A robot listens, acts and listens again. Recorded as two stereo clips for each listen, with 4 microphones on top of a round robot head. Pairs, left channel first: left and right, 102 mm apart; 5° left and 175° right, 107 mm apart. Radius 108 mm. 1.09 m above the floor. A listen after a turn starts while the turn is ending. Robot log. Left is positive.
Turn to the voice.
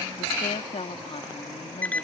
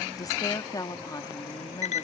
note: The woman speaking: 60° left.
cmd yaw +60
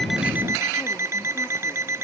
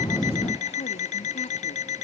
cmd idle
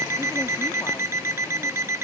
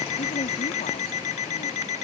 cmd idle
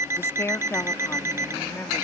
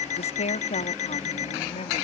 note: The woman speaking is now 25° left.
cmd yaw +25
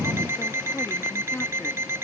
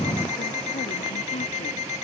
cmd idle
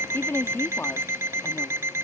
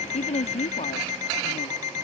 note: The woman speaking is now 20° left.
cmd yaw +20
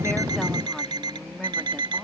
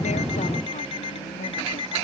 cmd idle
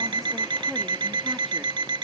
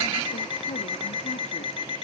cmd idle
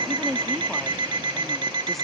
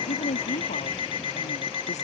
end: Facing the woman speaking.